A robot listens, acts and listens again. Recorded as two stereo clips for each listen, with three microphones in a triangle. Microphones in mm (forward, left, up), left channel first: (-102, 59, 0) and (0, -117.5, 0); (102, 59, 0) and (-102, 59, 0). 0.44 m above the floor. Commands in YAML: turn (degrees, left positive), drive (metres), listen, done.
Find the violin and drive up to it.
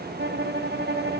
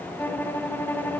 turn: -80
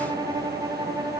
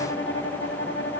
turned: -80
turn: 10
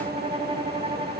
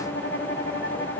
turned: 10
drive: 1.0
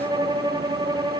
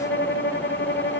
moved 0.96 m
drive: 1.0
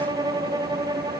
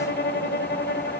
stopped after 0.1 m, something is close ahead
done: "Arrived at the violin, straight ahead."